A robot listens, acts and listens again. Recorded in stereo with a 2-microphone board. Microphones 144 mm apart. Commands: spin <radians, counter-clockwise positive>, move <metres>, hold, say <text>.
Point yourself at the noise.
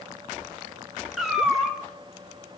spin -0.52
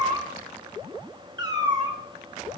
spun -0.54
spin -2.53
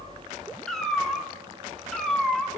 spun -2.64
say Found it: a cat meowing, straight ahead.